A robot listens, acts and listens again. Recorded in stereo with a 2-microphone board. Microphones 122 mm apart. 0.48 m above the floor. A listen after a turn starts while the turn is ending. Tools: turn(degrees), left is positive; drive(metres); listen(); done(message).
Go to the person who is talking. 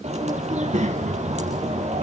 turn(degrees=-90)
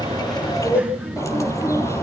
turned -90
turn(degrees=-10)
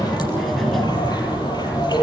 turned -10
drive(metres=1.0)
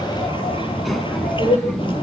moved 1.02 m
drive(metres=1.0)
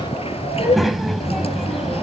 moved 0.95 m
drive(metres=1.0)
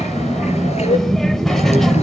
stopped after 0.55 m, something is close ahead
done("Arrived at the child speaking, straight ahead.")